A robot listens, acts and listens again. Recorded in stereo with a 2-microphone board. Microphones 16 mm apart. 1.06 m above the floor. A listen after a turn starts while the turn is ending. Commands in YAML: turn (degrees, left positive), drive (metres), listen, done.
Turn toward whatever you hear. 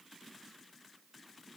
listen: true
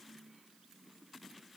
listen: true
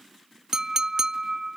turn: -30
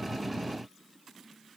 listen: true
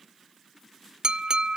turn: -125
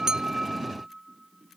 listen: true
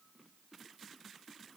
listen: true
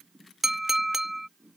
turn: -20
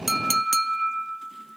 done: "Found it: a clink, straight ahead."